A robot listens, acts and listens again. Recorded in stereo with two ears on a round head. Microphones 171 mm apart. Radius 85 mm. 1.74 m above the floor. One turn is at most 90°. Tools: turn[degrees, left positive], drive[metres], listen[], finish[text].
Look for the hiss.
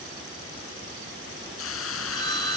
Action: turn[90]
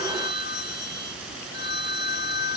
Action: listen[]
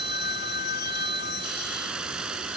Action: finish[Facing the hiss.]